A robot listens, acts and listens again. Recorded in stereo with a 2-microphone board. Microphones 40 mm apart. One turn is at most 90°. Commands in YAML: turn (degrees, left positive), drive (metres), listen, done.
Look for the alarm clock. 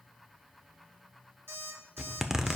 turn: -90
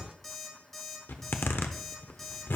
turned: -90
done: "Found it: an alarm clock, straight ahead."